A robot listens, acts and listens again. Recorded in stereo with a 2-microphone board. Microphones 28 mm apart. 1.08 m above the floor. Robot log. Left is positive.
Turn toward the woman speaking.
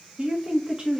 note: The woman speaking: about 30° right or 150° right.
cmd yaw -30
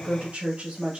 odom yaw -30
note: So it is at 130° right.
cmd yaw -130
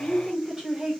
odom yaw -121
note: The woman speaking is now 15° right.
cmd yaw -15
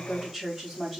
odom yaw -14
end: Facing the woman speaking, 2 to 4 m away.